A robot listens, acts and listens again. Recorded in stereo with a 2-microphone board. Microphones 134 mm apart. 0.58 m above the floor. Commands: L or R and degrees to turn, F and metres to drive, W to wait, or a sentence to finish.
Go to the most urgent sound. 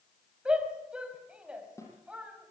R30
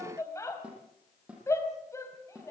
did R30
L20
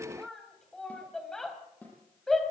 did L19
F1.0
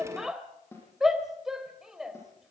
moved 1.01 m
F1.0
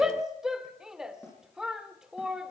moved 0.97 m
F1.0
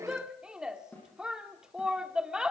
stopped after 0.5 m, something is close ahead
R10
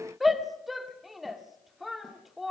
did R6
Arrived at the shout, straight ahead.